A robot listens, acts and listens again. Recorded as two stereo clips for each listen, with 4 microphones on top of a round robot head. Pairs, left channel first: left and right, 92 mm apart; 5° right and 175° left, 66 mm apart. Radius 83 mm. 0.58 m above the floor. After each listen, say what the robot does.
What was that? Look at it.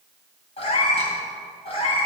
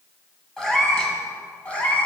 Turn 60° left.
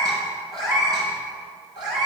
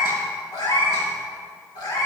Turn 40° right.
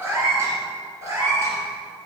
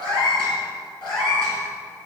Turn 25° right.
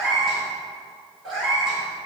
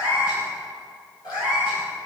Facing the cat meowing.